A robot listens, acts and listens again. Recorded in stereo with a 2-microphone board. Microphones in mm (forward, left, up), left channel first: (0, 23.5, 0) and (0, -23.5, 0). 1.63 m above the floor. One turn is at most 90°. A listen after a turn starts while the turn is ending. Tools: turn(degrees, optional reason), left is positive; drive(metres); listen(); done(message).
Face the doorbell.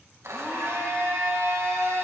listen()
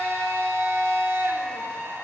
listen()
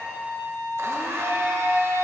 done("I can't make out a doorbell to turn to.")